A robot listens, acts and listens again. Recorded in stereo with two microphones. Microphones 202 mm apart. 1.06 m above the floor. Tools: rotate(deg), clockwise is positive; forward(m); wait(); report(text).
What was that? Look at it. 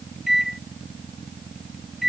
rotate(-30)
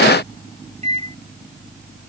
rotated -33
rotate(35)
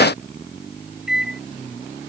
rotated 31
report("Found it: a microwave, straight ahead.")